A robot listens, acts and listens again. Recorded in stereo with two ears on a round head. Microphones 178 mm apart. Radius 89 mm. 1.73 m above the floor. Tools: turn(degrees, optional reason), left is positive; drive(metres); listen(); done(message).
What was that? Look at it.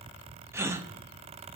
turn(degrees=-30)
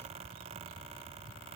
listen()
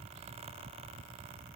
done("I heard a gasp, but can't make it out now. It was about 15° left or 135° right.")